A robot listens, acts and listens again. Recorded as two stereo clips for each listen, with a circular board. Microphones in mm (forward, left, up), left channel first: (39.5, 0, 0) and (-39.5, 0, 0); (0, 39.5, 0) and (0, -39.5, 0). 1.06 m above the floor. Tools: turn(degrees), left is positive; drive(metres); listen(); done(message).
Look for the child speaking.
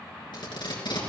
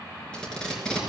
listen()
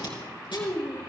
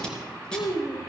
turn(degrees=60)
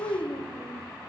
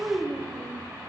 turn(degrees=-15)
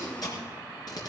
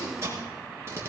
listen()
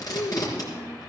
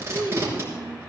turn(degrees=-15)
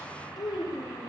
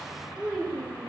turn(degrees=-10)
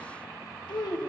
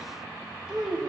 done("Facing the child speaking, 2 to 4 m away.")